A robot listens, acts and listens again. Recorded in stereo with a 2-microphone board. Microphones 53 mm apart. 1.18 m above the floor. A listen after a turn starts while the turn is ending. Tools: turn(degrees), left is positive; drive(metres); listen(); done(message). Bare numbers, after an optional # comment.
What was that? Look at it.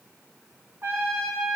# The trumpet: about 45° right or 135° right.
turn(-45)
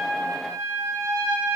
# So it is at 90° right.
turn(-90)
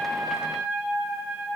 # The trumpet is now 15° right.
turn(-15)
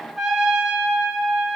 done("Facing the trumpet.")